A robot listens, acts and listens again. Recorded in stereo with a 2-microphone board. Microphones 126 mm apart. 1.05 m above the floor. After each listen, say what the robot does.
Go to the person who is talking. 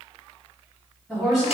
Turn 30° right.
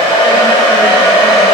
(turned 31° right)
Keep listening.
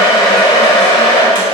Keep listening.
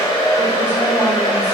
I heard a woman speaking, but can't make it out now. It was about 25° left or 140° right. I did not reach it.